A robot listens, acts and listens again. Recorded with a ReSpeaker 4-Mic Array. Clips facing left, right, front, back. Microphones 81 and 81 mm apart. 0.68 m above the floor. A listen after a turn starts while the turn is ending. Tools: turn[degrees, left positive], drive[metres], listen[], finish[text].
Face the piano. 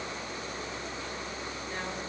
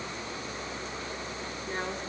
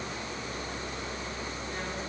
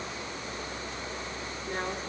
Action: listen[]
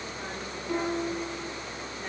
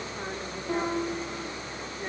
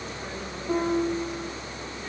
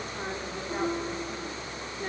Thought: The piano: 25° right.
Action: turn[-25]
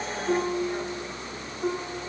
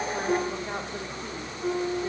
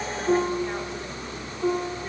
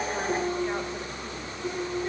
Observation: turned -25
Thought: The piano is now 25° left.
Action: turn[25]
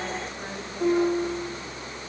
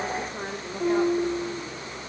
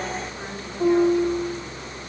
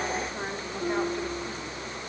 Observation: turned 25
Action: finish[Facing the piano.]